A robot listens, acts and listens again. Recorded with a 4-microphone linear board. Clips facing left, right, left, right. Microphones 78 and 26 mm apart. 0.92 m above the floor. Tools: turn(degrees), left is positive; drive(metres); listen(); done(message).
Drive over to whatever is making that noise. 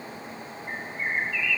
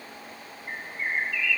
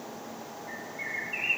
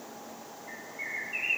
turn(degrees=30)
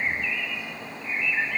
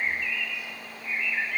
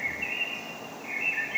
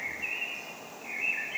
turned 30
turn(degrees=145)
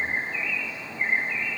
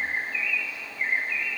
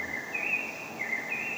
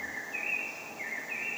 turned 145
turn(degrees=25)
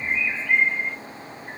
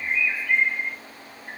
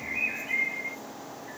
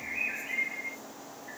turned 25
drive(metres=1.0)
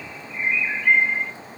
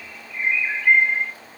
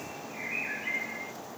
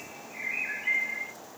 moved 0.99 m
drive(metres=1.0)
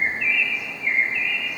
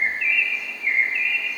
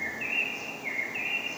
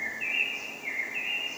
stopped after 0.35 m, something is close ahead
done("Arrived at the bird, straight ahead.")